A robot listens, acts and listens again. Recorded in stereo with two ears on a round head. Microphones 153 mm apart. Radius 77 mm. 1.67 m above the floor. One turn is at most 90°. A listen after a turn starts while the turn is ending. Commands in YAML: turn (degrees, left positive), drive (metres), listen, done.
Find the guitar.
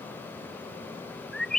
listen: true
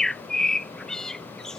listen: true
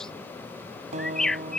turn: -40
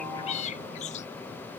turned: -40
listen: true
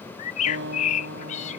turn: -90
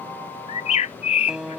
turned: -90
done: "Facing the guitar."